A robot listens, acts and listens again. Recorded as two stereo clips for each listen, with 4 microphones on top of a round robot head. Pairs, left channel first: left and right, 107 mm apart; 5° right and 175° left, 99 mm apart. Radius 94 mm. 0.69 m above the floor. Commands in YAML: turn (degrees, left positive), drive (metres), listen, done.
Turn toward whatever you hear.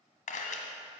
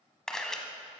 turn: 75
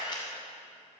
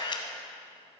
turn: 30
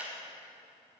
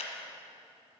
turn: -10
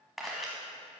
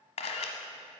done: "Found it: a camera shutter, straight ahead."